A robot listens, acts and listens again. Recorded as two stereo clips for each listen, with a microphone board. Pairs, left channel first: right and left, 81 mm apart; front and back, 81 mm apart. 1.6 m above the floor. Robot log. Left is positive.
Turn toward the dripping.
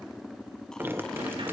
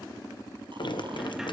note: The dripping: 25° left.
cmd yaw +25
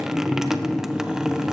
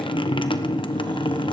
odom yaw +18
end: Found it: dripping, straight ahead, 1 to 2 m away.